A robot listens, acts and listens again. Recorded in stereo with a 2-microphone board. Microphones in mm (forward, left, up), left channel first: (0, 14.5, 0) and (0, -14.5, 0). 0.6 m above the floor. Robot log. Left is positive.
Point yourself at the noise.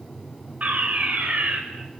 note: The fire alarm: about 65° right or 115° right.
cmd yaw -65
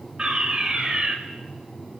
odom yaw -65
note: So it is at 40° right.
cmd yaw -40
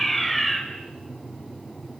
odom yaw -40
end: Facing the fire alarm.